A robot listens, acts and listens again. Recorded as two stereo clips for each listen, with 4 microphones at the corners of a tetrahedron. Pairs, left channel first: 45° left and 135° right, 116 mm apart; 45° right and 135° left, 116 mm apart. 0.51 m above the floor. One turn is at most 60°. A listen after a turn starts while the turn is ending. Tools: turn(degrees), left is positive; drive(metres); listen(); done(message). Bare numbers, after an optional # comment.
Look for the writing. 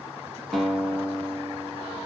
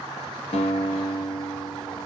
listen()
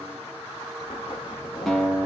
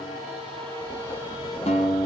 done("Facing the writing, under 1 m away.")